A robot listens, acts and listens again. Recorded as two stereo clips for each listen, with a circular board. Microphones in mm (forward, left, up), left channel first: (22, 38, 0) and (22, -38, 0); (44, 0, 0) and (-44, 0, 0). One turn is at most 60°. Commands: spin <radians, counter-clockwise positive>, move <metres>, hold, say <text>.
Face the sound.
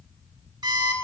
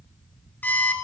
spin -1.05
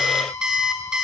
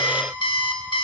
spin -0.17
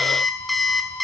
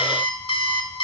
say Facing the alarm clock.